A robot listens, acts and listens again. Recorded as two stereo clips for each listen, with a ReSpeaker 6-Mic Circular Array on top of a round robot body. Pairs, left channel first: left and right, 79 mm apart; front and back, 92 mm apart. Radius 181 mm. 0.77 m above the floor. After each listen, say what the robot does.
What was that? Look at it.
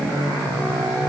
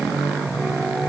Keep listening.
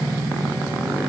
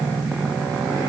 Keep listening.
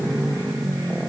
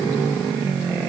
I can't make out anything to turn to.